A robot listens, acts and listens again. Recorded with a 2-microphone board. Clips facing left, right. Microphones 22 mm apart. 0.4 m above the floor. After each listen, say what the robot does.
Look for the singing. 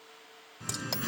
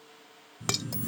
Turn 65° left.
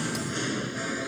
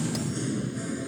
Turn 40° left.
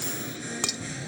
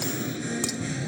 Facing the singing.